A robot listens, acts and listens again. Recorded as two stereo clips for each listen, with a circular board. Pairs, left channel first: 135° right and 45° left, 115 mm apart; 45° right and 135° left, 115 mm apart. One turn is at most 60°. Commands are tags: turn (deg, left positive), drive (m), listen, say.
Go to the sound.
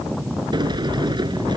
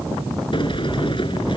<drive m="1.0"/>
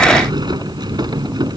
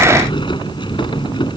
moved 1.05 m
<drive m="1.0"/>
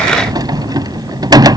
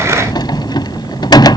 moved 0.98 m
<drive m="1.0"/>
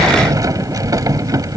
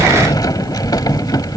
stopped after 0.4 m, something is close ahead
<say>I am next to the sliding door.</say>